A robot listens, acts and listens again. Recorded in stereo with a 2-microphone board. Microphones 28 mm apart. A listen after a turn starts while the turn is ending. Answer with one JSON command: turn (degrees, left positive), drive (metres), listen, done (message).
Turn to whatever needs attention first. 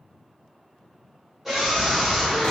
{"turn": -30}
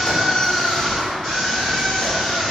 {"turn": 20}
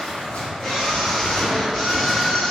{"turn": 10}
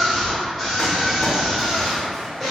{"done": "Found it: a scream, straight ahead, 1 to 2 m away."}